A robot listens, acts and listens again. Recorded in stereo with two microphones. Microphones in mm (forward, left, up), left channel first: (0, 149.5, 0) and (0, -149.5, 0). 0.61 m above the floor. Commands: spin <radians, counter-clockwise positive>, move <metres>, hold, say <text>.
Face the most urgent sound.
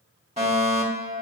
spin -0.44
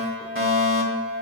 spin -2.18
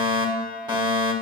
spin -0.35
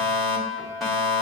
say Facing the fire alarm.